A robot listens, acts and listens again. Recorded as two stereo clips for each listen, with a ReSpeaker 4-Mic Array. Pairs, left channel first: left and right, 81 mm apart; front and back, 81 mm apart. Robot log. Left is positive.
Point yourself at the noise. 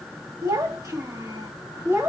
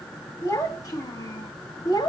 note: The child speaking: 30° right.
cmd yaw -30
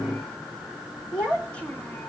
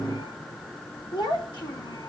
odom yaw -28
note: The child speaking is now 20° left.
cmd yaw +20
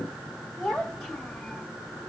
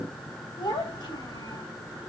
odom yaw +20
end: Found it: a child speaking, straight ahead, 2 to 4 m away.